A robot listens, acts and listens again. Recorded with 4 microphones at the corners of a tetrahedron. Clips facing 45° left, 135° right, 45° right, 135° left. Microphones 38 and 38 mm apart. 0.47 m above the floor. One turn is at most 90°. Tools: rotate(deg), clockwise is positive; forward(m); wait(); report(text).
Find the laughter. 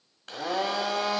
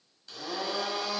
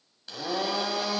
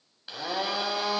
wait()
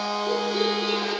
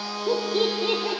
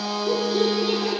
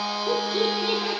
rotate(90)
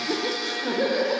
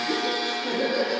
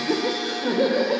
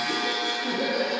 rotate(10)
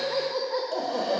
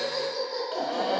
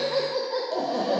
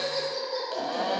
rotate(-15)
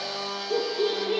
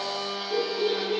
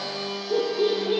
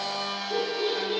report("Facing the laughter.")